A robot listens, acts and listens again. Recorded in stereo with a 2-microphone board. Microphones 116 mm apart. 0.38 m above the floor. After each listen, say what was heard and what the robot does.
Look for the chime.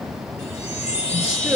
Turn 90° left.
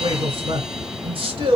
Keep listening.
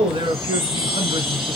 Facing the chime.